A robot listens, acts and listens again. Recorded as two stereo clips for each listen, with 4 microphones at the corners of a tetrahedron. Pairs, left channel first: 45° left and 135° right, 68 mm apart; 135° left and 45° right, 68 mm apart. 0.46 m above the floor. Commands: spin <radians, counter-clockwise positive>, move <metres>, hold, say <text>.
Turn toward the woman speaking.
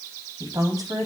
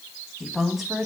spin -2.27
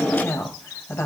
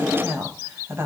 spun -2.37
say Found it: a woman speaking, straight ahead.